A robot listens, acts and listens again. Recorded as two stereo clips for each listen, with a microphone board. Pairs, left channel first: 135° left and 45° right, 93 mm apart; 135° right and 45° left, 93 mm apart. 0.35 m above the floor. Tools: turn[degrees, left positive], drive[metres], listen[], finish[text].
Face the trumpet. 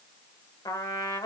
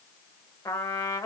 Thought: The trumpet: 170° left.
Action: turn[170]
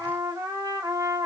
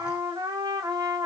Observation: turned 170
Action: finish[Facing the trumpet, under 1 m away.]